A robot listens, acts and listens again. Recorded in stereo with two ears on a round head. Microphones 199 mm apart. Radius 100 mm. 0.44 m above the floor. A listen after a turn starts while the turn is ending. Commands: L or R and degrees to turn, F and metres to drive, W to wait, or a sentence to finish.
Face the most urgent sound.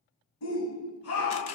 L70
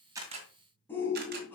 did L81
L10
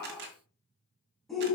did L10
Facing the shout, 2 to 4 m away.